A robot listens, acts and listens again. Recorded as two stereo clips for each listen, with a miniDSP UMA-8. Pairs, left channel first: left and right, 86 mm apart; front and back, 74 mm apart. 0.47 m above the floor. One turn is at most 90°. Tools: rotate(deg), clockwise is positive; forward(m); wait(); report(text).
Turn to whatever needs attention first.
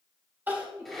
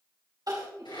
rotate(90)
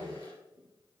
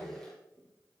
rotate(65)
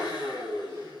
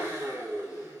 wait()
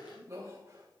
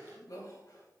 rotate(35)
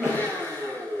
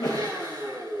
report("Found it: crying, straight ahead.")